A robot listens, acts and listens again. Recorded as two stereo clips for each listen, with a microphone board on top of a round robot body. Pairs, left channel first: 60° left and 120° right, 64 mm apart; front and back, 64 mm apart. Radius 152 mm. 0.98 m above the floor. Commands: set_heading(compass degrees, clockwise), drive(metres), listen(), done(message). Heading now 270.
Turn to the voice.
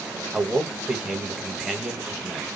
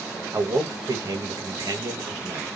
set_heading(115)
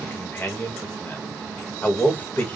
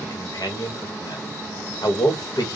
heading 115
done("Facing the man speaking, 1 to 2 m away.")